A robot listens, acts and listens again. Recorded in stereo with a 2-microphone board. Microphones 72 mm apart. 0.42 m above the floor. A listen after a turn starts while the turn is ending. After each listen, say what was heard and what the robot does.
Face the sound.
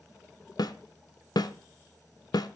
The snare drum: about 65° left or 115° left. Turn 65° left.
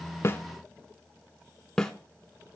Found it: a snare drum, straight ahead, under 1 m away.